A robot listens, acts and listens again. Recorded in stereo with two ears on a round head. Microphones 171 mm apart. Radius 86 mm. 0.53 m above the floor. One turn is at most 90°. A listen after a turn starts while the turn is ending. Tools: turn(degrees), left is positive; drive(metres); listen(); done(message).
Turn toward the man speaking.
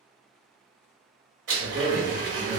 turn(degrees=-45)
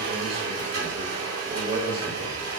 turn(degrees=-30)
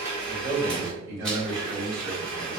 turn(degrees=-20)
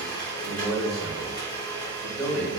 done("Found it: a man speaking, straight ahead, 2 to 4 m away.")